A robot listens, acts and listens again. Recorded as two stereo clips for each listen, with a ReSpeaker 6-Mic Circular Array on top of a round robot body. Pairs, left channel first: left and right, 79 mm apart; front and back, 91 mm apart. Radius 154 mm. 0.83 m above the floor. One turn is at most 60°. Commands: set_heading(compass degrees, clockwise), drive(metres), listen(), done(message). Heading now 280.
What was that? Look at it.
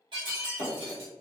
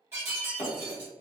set_heading(340)
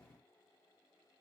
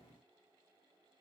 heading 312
set_heading(12)
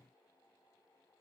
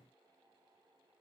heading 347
set_heading(37)
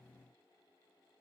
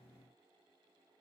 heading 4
set_heading(34)
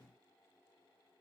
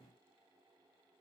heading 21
set_heading(36)
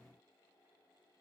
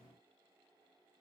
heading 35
done("Facing where the breaking glass came from. I can't hear it now.")